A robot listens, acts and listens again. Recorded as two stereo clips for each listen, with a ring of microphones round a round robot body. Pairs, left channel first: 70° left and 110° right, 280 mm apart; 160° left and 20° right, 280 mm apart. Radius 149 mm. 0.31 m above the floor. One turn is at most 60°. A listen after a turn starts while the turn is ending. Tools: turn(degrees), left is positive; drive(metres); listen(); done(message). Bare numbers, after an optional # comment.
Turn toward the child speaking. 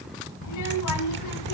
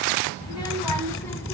# The child speaking: 75° left.
turn(60)
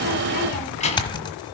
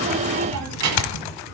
done("Facing the child speaking.")